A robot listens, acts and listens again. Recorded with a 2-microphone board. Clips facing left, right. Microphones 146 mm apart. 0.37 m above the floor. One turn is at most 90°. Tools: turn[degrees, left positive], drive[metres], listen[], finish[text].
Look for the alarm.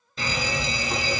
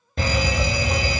Thought: The alarm: about 55° right or 125° right.
Action: turn[-55]
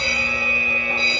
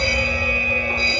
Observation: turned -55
Thought: So it is at 45° right.
Action: turn[-45]
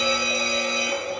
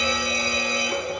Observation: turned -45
Action: finish[Found it: an alarm, straight ahead.]